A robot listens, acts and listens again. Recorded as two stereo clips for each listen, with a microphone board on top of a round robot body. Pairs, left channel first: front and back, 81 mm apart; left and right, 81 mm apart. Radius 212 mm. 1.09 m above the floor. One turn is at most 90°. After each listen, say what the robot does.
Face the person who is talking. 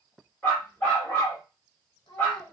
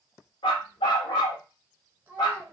Turn 20° right.
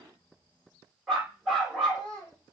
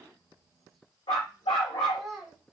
Found it: a child speaking, straight ahead, 1 to 2 m away.